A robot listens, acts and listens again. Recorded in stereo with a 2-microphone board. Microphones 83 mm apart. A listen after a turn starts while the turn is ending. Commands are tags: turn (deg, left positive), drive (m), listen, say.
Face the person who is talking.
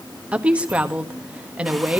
<turn deg="-30"/>
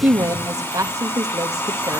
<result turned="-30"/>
<turn deg="-135"/>
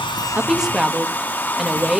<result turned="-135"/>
<say>Facing the woman speaking.</say>